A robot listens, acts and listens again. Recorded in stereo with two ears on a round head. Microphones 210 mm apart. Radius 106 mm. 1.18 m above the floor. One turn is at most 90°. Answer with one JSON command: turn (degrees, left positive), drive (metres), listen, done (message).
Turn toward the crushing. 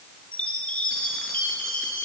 {"listen": true}
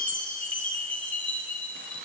{"listen": true}
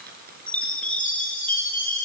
{"turn": -40}
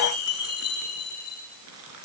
{"turn": -90}
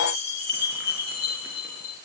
{"turn": -10}
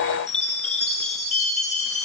{"listen": true}
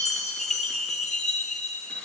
{"done": "I heard crushing from this way, but can't make it out now."}